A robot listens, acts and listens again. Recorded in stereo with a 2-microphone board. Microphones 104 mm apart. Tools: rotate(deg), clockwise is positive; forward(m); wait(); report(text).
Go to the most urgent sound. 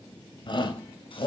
rotate(-50)
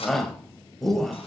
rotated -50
forward(1.0)
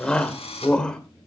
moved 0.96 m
rotate(-10)
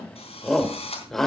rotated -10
forward(1.0)
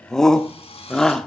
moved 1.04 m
forward(1.0)
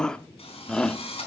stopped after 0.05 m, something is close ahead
rotate(-10)
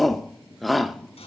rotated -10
report("Arrived at the shout, straight ahead.")